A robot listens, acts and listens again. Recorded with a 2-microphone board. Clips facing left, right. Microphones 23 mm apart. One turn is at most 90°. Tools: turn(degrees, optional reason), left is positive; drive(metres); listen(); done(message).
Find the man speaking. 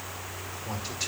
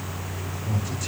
turn(degrees=55, reason="The man speaking: about 55° left or 125° left.")
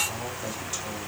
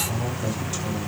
done("Found it: a man speaking, straight ahead.")